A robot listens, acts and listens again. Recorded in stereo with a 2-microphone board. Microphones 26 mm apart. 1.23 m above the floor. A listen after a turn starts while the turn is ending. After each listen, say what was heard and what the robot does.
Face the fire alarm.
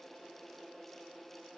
Keep listening.
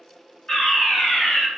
The fire alarm: about 25° left or 155° left. Turn 25° left.
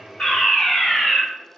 So it is at 125° left. Turn 125° left.
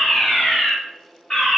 The fire alarm is now 40° left. Turn 40° left.
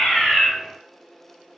Keep listening.
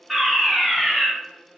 Found it: a fire alarm, straight ahead, 1 to 2 m away.